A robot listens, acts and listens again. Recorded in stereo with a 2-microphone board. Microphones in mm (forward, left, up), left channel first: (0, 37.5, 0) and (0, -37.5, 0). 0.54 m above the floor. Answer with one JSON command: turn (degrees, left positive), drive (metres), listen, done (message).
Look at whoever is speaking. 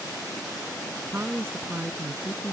{"turn": -35}
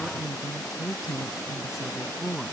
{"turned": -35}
{"done": "Found it: a woman speaking, straight ahead."}